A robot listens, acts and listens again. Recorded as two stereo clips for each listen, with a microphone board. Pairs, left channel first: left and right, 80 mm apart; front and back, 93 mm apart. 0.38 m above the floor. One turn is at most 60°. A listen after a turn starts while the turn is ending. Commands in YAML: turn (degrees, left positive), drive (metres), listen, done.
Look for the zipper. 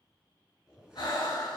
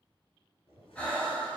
done: "Found it: a zipper, straight ahead."